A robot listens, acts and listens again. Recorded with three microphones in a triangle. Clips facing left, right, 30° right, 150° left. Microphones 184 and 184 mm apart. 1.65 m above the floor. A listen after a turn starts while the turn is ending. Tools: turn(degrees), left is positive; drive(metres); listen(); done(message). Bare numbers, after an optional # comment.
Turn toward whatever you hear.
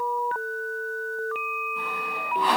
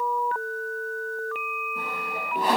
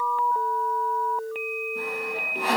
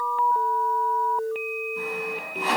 # The sawing: 50° right.
turn(-50)
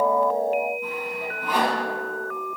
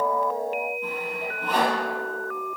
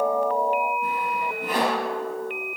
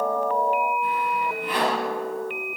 # The sawing is now 10° left.
turn(10)
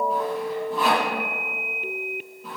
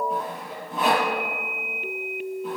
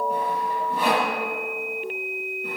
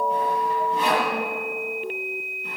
done("Facing the sawing.")